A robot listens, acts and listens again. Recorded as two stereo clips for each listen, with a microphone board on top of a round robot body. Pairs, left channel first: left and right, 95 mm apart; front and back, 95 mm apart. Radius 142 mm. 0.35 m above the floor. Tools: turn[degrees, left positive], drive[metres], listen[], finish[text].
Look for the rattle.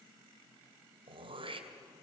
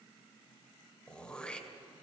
Action: listen[]
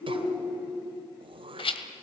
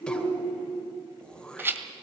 Thought: The rattle: 110° left.
Action: turn[110]
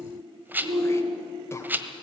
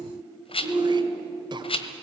Thought: The rattle is now 20° right.
Action: turn[-20]
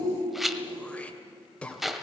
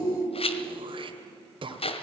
Action: finish[Found it: a rattle, straight ahead, 1 to 2 m away.]